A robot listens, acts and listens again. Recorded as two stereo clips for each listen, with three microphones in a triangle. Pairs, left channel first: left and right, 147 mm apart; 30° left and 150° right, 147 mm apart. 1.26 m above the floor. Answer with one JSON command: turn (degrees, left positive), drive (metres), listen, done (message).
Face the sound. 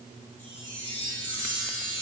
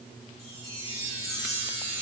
{"turn": 170}
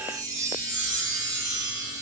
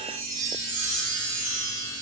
{"turn": -30}
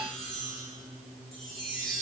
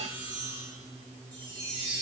{"done": "Found it: a chime, straight ahead."}